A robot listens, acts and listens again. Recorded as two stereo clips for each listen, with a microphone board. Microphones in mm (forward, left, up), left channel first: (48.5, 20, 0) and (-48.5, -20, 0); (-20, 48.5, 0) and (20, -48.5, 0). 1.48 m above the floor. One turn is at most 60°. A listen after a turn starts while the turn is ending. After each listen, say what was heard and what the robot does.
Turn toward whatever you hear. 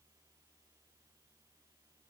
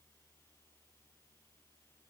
Keep listening.
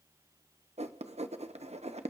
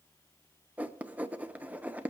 The writing: 145° right. Turn 60° right.
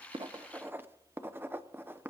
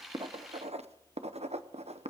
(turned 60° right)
The writing is now 85° right. Turn 60° right.
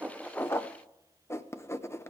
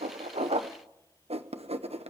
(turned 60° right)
The writing is now 45° right. Turn 45° right.
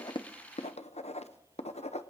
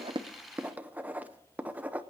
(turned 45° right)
The writing is now 10° left. Turn 10° left.
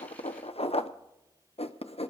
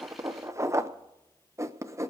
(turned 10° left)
Facing the writing.